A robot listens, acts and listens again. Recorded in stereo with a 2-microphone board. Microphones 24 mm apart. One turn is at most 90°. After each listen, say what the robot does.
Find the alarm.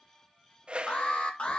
Turn 55° left.
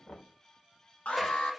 Turn 70° left.
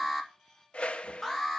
Found it: an alarm, straight ahead, 1 to 2 m away.